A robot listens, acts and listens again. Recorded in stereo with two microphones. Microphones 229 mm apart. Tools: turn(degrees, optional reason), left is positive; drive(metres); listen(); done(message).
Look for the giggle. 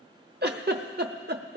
turn(degrees=-45, reason="The giggle: about 45° right or 135° right.")
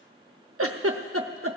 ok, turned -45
turn(degrees=-85, reason="So it is at 85° right.")
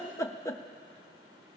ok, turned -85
turn(degrees=10, reason="The giggle is now 10° left.")
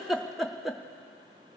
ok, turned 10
done("Found it: a giggle, straight ahead.")